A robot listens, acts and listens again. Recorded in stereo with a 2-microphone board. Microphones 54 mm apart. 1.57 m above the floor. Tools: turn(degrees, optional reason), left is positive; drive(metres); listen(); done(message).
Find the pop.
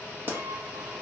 turn(degrees=-40, reason="The pop: about 40° right or 140° right.")
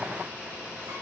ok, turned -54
listen()
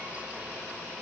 done("I heard a pop, but can't make it out now. It was about 10° left or 85° right.")